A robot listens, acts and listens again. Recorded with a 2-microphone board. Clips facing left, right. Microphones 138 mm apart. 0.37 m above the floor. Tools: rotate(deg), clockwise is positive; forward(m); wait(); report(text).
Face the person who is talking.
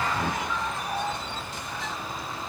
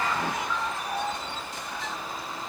wait()
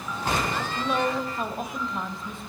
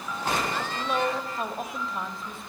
rotate(-30)
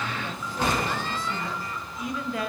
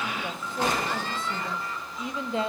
rotate(30)
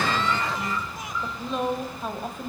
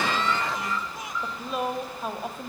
report("Found it: a woman speaking, straight ahead.")